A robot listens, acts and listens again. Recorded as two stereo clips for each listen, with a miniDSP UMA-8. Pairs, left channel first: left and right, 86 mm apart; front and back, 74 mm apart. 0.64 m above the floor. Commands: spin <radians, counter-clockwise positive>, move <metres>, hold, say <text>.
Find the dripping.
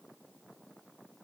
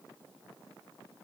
hold
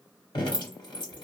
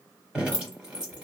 spin 1.83
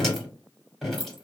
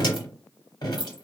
say Facing the dripping, 1 to 2 m away.